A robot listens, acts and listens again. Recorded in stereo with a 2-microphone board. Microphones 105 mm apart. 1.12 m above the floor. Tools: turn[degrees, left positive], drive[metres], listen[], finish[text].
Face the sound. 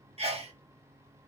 Thought: The sneeze: about 70° right or 110° right.
Action: turn[-70]
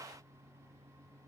Action: listen[]
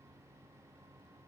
Action: finish[I heard a sneeze, but can't make it out now. It was about straight ahead or 40° right.]